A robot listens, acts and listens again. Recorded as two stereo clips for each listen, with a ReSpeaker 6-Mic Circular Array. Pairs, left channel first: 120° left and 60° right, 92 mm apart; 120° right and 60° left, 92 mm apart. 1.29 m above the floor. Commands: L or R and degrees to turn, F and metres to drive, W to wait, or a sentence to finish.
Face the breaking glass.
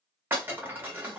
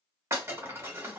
Facing the breaking glass, 1 to 2 m away.